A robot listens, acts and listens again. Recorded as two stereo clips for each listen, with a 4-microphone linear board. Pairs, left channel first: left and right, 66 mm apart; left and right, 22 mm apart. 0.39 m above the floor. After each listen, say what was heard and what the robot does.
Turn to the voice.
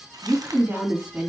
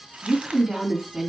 The woman speaking: about 20° right or 160° right. Turn 20° right.
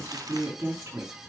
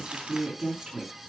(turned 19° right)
So it is at 140° right. Turn 140° right.
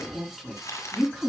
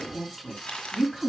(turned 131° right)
Facing the woman speaking, 2 to 4 m away.